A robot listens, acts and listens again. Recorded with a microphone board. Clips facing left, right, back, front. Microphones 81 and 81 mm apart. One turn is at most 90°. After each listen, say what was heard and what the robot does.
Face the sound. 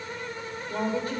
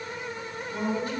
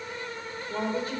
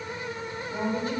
The woman speaking: 135° left. Turn 90° left.
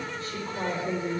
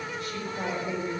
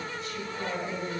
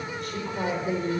The woman speaking is now 35° left. Turn 35° left.
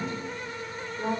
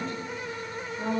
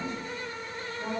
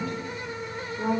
The woman speaking is now 10° left. Turn 10° left.
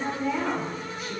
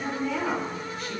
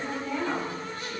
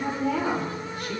Facing the woman speaking, 2 to 4 m away.